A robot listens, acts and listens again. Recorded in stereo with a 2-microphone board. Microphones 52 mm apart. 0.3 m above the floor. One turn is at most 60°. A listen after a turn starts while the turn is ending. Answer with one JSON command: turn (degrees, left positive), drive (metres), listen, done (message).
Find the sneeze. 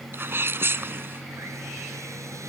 {"turn": -45}
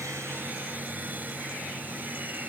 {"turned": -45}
{"listen": true}
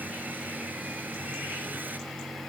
{"done": "I heard a sneeze, but can't make it out now. It was about straight ahead or 90° right."}